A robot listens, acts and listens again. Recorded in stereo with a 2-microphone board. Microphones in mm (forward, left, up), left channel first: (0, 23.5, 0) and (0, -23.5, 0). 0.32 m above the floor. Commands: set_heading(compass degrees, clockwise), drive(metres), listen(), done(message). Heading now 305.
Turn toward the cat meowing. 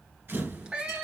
set_heading(330)
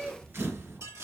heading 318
set_heading(358)
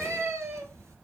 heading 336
set_heading(76)
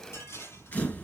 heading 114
set_heading(79)
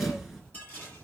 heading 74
listen()
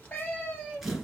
set_heading(49)
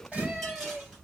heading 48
done("Facing the cat meowing.")